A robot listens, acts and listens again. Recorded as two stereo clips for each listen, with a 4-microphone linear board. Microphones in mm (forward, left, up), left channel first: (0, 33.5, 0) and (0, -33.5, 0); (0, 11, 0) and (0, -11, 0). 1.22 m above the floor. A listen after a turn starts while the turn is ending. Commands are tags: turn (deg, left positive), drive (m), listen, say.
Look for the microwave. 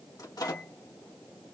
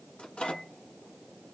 <turn deg="60"/>
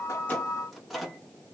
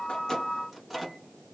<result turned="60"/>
<say>Found it: a microwave, straight ahead.</say>